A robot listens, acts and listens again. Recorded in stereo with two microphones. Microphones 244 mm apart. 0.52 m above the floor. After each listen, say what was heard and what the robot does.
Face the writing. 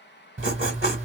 The writing: about 55° right or 125° right. Turn 55° right.
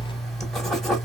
Found it: writing, straight ahead.